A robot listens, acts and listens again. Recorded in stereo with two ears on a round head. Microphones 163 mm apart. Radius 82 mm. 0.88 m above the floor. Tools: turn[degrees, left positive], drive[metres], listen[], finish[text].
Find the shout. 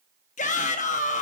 Thought: The shout: about 45° left or 135° left.
Action: turn[45]
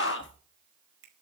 Thought: So it is at 85° left.
Action: turn[85]
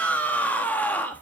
Thought: The shout is now 10° left.
Action: turn[10]
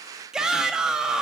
Action: finish[Facing the shout, 1 to 2 m away.]